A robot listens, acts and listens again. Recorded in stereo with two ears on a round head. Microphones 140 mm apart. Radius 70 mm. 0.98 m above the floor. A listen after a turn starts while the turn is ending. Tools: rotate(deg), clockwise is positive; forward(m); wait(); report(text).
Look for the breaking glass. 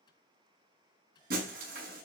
rotate(60)
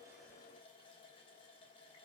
wait()
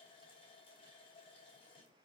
report("I heard breaking glass, but can't make it out now. It was about straight ahead or 60° right.")